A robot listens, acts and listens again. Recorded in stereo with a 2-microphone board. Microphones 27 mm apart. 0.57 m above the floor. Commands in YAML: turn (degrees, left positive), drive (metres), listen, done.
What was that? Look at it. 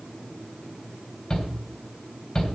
turn: 30
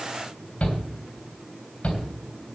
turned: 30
turn: 120
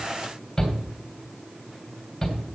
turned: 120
turn: 20
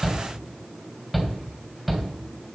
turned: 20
done: "Found it: a shout, straight ahead, 2 to 4 m away."